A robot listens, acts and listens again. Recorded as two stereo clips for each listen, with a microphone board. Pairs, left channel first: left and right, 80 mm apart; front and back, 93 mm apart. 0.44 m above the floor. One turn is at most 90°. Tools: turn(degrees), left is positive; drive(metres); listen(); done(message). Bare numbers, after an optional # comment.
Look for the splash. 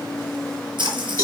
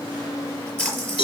# The splash: 75° right.
turn(-75)
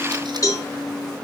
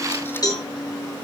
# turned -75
done("I heard a splash from this way, but can't make it out now.")